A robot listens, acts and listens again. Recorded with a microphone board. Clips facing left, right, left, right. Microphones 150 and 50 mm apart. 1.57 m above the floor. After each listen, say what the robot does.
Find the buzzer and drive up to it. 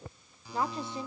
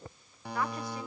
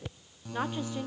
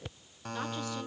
Turn 60° right.
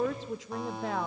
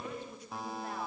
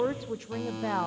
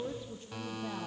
Drive 1.0 m forward.
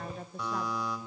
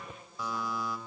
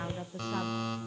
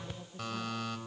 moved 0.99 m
Drive 1.0 m forward.
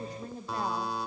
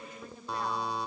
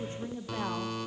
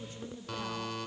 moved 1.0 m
Drive 1.0 m forward.
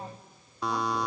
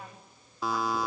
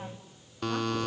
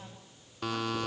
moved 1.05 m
Drive 1.0 m forward.
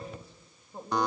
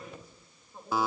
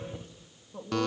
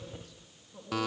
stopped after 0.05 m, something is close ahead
I am next to the buzzer.